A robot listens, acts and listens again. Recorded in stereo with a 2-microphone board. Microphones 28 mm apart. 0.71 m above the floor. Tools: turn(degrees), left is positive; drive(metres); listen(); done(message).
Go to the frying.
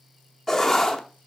listen()
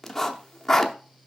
listen()
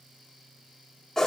done("I can't make out frying to turn to.")